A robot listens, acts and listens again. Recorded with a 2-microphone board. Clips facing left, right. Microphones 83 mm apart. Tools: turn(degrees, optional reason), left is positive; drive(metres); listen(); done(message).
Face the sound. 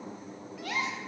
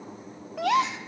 turn(degrees=-75, reason="The gasp: about 75° right or 105° right.")
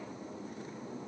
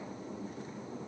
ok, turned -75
listen()
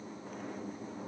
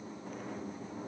done("I heard a gasp, but can't make it out now. It was about straight ahead or 30° right.")